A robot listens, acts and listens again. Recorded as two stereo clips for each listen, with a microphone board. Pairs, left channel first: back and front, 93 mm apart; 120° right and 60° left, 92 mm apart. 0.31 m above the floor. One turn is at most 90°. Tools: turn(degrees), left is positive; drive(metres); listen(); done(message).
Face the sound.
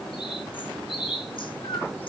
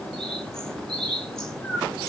turn(degrees=90)
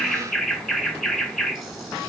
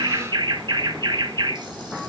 turn(degrees=90)
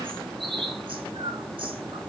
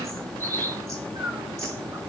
done("Facing the bird.")